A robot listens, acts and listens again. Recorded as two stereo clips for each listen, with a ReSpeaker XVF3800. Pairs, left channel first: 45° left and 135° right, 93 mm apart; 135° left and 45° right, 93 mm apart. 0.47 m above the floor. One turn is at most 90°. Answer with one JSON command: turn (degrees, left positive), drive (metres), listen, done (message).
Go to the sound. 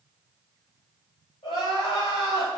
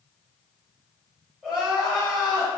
{"turn": 35}
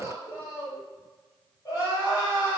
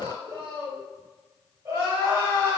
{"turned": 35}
{"drive": 1.0}
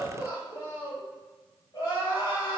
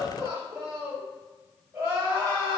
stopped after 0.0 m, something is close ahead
{"turn": 10}
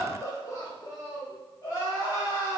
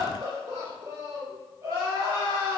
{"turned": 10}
{"done": "Blocked. The crying is further on, straight ahead."}